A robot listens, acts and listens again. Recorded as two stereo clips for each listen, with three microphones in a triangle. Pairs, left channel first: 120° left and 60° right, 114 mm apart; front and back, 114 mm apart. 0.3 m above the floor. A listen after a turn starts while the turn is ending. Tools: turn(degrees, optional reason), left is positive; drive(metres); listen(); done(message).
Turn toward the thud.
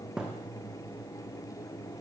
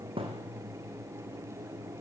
turn(degrees=-145, reason="The thud: 145° right.")
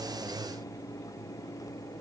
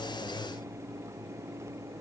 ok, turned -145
done("Facing where the thud came from. I can't hear it now.")